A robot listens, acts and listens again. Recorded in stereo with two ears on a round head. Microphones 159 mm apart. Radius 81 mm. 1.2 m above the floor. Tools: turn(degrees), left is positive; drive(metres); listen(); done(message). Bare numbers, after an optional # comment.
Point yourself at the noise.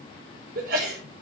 # The sneeze: about 50° right or 130° right.
turn(-50)
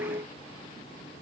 listen()
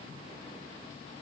done("I heard a sneeze, but can't make it out now. It was about straight ahead or 80° right.")